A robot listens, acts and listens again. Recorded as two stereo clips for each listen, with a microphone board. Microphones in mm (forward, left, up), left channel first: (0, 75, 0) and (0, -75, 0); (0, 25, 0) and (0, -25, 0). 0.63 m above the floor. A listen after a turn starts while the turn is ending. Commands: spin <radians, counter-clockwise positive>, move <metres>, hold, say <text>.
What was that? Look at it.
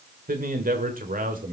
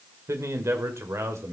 spin -1.22
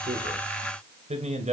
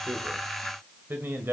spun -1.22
spin -0.87
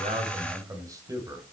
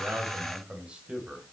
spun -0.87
spin -0.44
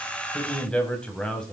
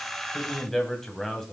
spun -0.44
say Facing the man speaking, 2 to 4 m away.